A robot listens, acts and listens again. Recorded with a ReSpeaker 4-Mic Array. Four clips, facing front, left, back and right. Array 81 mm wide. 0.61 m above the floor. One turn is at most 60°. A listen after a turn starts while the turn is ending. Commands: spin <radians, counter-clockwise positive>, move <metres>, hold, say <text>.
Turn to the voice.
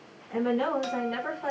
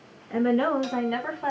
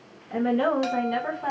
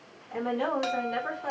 spin 1.05
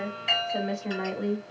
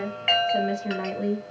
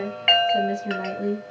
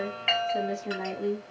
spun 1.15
spin 0.96
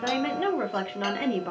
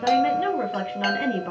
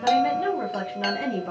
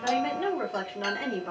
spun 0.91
spin 0.61
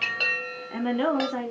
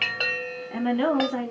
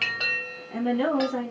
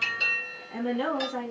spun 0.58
spin 0.96
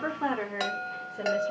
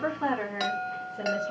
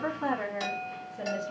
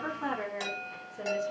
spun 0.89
spin 0.35
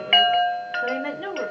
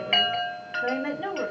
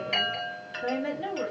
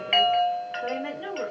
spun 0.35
say Found it: a woman speaking, straight ahead, 1 to 2 m away.